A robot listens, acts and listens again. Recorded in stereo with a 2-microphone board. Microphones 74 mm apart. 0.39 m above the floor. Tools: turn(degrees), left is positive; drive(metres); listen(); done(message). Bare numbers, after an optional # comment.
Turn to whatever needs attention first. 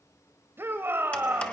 # The shout: about 30° right or 150° right.
turn(-30)
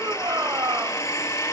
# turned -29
# So it is at 115° right.
turn(-115)
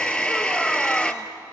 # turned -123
# Nothing new. It was at 10° left.
turn(10)
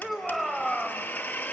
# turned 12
done("Facing the shout, 1 to 2 m away.")